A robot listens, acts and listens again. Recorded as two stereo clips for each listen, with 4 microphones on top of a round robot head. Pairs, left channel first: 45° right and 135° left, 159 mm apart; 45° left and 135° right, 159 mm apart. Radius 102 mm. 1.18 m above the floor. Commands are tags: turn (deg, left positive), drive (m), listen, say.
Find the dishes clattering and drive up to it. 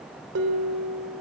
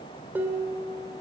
<turn deg="145"/>
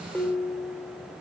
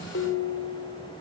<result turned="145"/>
<turn deg="40"/>
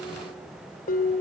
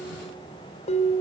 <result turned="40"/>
<drive m="1.0"/>
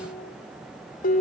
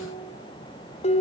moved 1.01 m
<drive m="1.0"/>
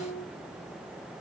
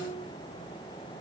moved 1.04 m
<turn deg="-15"/>
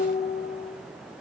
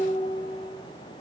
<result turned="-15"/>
<drive m="1.0"/>
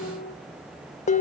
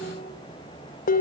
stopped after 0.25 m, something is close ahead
<say>I am next to the dishes clattering.</say>